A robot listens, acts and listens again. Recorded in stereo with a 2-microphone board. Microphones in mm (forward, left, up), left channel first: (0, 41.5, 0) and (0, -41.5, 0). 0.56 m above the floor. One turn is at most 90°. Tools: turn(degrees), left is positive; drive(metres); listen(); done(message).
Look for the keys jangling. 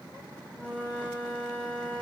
listen()
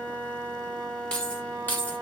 turn(degrees=20)
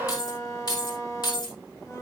turn(degrees=90)
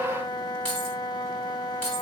turn(degrees=15)
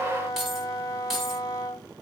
done("Facing the keys jangling, 2 to 4 m away.")